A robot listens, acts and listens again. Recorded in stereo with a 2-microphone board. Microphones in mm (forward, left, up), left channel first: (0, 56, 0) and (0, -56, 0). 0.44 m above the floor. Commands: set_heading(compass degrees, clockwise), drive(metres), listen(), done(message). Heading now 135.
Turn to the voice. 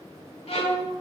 listen()
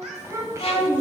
set_heading(160)
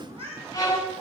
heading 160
listen()
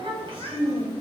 set_heading(285)
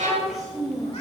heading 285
done("Found it: a child speaking, straight ahead.")